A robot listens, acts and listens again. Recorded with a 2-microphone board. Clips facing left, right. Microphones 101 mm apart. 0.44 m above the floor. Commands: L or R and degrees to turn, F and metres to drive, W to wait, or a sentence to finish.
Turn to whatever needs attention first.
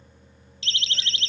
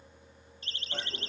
L90
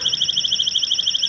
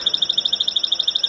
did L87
R10
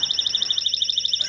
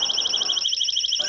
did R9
Facing the siren.